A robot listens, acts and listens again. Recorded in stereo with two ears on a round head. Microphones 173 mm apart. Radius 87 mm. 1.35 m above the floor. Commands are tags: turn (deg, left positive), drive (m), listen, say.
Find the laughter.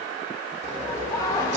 <turn deg="20"/>
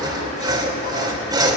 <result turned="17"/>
<listen/>
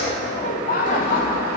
<turn deg="130"/>
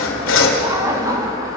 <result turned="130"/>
<turn deg="-20"/>
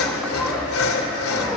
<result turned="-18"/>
<listen/>
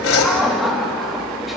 <say>Facing the laughter.</say>